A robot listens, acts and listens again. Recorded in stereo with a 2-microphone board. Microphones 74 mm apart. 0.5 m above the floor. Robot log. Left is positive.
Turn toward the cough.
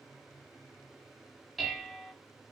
cmd idle
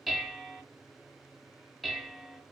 cmd idle
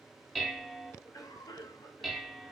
note: The cough: about 55° left or 125° left.
cmd yaw +55
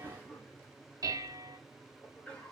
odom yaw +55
note: So it is at 20° left.
cmd yaw +20
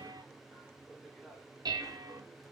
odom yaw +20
end: Facing the cough.